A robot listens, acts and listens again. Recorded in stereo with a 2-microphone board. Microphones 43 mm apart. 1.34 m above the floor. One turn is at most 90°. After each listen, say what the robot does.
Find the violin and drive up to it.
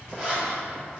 Keep listening.
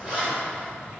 Keep listening.
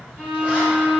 Turn 70° right.
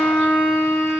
Turn 40° right.
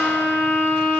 Drive 1.0 m forward.
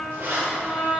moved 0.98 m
Turn 10° left.
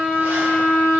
Drive 1.0 m forward.
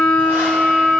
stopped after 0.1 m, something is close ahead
Turn 10° left.
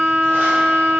I am next to the violin.